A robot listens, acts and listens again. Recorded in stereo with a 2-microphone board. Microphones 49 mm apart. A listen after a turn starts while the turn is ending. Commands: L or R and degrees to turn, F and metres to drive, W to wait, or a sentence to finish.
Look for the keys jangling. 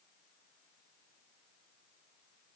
W
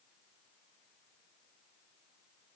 W
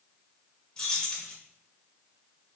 L30
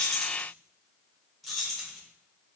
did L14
Facing the keys jangling.